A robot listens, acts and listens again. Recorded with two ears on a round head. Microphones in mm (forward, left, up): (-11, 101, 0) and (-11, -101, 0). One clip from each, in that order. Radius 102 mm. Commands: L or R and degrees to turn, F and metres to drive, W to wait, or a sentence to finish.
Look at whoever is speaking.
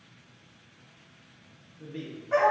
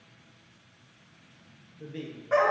R30
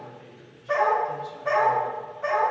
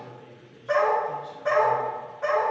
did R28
L20
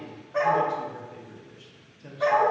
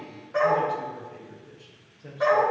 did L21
Facing the man speaking, under 1 m away.